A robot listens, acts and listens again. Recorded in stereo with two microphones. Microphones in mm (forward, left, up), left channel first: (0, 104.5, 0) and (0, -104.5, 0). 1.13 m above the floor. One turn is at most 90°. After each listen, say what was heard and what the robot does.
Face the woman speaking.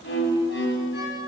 Keep listening.
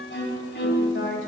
The woman speaking: about 65° left or 115° left. Turn 65° left.
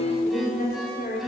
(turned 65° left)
So it is at 45° left. Turn 45° left.
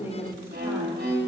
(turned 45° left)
The woman speaking is now 10° right. Turn 10° right.
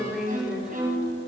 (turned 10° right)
Facing the woman speaking, 2 to 4 m away.